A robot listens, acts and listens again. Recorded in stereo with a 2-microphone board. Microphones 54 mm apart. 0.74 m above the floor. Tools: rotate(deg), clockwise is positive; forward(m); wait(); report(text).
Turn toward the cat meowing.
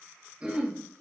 wait()
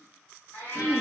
rotate(-90)
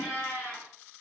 report("Found it: a cat meowing, straight ahead, 2 to 4 m away.")